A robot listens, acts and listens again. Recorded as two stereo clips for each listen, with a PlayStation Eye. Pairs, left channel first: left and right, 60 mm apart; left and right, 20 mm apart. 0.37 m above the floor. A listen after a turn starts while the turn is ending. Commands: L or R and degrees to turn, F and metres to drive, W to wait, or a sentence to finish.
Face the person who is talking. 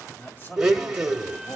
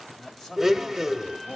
L35
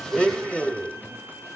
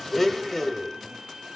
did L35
W
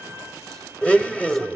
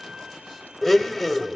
W
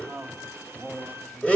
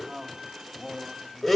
L10
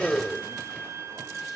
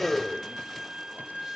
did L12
W
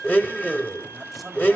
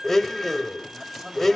W
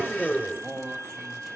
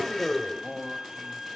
Found it: a man speaking, straight ahead, 2 to 4 m away.